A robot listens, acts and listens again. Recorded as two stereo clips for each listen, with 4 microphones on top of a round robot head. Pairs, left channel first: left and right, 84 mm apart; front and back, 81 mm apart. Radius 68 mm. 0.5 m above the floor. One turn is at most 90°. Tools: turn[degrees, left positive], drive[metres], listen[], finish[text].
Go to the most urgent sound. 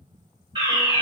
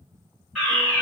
Thought: The fire alarm: 90° right.
Action: turn[-90]
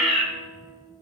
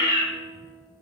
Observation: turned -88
Action: drive[1.0]
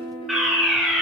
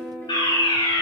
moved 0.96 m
Action: drive[1.0]
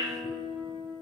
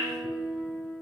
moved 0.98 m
Action: listen[]
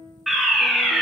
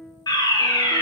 Action: drive[1.0]
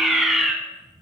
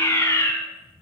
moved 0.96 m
Action: drive[1.0]
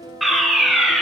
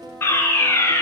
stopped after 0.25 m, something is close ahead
Action: finish[Arrived at the fire alarm, straight ahead.]